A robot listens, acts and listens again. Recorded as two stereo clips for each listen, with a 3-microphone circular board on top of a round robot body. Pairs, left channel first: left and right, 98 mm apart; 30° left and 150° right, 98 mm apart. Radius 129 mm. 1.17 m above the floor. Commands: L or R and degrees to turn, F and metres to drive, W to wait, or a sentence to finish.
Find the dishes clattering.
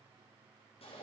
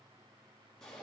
W
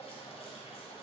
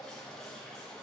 W
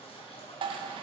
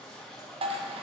R125
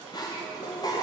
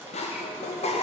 L35
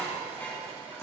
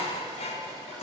L15
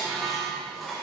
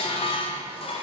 Found it: dishes clattering, straight ahead, under 1 m away.